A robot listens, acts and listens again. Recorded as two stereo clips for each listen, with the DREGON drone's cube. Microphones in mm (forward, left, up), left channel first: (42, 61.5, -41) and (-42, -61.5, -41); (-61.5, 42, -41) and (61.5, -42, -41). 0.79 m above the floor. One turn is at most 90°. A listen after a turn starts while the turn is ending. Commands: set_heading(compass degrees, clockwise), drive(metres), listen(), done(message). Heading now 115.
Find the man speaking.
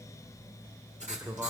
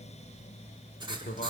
set_heading(25)
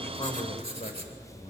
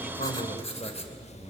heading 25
set_heading(295)
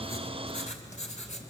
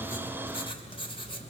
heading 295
listen()
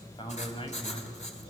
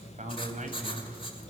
done("Found it: a man speaking, straight ahead.")